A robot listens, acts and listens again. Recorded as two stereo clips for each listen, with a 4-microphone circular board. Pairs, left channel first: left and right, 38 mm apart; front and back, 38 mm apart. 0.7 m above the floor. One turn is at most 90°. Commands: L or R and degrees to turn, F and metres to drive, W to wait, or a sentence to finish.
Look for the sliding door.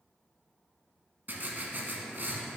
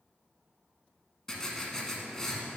W
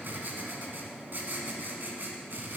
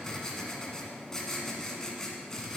W
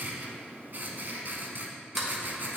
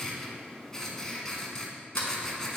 Found it: a sliding door, straight ahead.